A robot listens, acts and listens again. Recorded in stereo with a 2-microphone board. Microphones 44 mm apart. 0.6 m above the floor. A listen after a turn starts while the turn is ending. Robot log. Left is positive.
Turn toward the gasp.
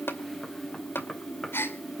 note: The gasp: about 60° left or 120° left.
cmd yaw +60
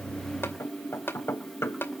cmd idle
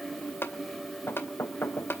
end: I heard a gasp, but can't make it out now. It was about straight ahead or 60° left.